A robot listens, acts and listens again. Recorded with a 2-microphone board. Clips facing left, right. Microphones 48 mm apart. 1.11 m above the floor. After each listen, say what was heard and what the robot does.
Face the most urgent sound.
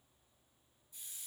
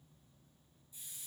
Keep listening.
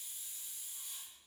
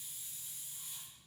Keep listening.
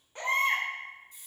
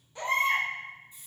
The baby crying: about 40° left or 140° left. Turn 40° left.
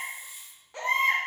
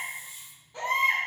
So it is at 100° left. Turn 100° left.
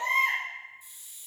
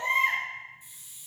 The baby crying is now 15° right. Turn 15° right.
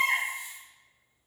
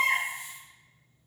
Facing the baby crying.